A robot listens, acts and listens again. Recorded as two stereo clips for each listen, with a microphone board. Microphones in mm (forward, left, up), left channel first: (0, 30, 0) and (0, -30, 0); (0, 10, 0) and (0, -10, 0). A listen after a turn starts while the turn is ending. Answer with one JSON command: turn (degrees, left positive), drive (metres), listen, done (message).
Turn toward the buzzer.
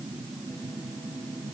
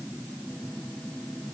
{"listen": true}
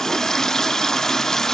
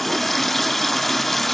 {"listen": true}
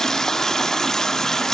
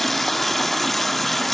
{"done": "I can't make out a buzzer to turn to."}